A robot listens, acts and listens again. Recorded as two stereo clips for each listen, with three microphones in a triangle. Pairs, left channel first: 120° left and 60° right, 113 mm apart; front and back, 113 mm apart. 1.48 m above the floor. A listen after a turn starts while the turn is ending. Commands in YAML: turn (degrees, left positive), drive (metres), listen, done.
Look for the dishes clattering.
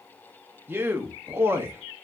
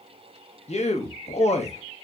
listen: true
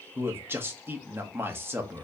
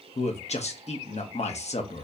listen: true
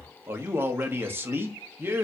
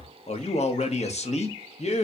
done: "I can't make out dishes clattering to turn to."